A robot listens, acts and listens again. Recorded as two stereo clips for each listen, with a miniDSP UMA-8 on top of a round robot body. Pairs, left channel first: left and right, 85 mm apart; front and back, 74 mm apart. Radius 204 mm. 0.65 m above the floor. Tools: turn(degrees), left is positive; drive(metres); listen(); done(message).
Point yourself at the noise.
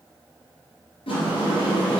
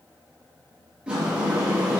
turn(degrees=100)
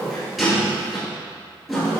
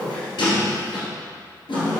done("Found it: a sliding door, straight ahead, 2 to 4 m away.")